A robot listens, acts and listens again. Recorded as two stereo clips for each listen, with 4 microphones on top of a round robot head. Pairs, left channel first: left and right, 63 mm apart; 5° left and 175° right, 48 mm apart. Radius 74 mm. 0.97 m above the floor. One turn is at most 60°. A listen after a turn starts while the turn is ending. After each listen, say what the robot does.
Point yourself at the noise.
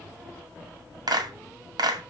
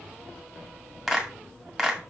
Turn 60° right.
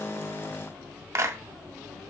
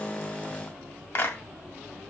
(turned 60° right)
Turn 40° right.
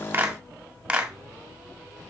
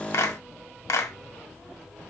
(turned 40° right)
Turn 15° right.
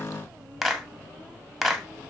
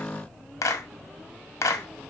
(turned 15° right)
Facing the clap, 1 to 2 m away.